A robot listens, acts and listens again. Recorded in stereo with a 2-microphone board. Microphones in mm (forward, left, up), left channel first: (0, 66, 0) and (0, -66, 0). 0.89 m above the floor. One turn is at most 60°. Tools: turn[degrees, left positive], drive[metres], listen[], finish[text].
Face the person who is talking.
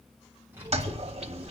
Thought: The child speaking: about 15° right or 165° right.
Action: turn[-15]
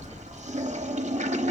Action: turn[30]
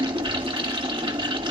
Thought: So it is at 25° right.
Action: turn[-25]
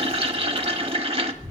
Thought: The child speaking is now 15° right.
Action: turn[-15]
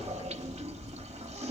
Action: finish[Facing the child speaking, over 4 m away.]